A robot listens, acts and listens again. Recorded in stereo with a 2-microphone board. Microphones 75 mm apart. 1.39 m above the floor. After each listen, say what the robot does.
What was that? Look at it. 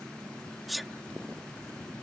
Turn 30° left.
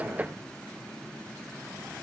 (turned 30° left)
Keep listening.
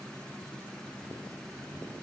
I heard a sneeze, but can't make it out now. It was about 30° right or 150° left.